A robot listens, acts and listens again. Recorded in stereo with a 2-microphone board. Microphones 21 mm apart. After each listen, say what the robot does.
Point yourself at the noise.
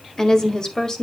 Turn 30° left.
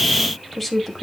Facing the woman speaking.